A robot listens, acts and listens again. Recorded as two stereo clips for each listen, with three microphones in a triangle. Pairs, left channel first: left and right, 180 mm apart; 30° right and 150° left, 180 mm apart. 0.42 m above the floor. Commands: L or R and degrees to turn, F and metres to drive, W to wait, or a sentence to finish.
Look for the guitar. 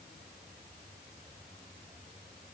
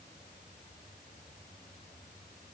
W
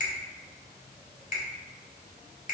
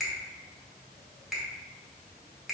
W
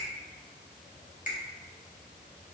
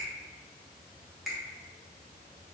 I can't make out a guitar, only a finger snap.